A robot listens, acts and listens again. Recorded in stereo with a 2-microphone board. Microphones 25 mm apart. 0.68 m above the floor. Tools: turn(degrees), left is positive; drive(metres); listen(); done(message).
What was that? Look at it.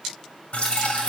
turn(degrees=55)
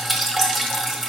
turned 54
done("Facing the dripping, 1 to 2 m away.")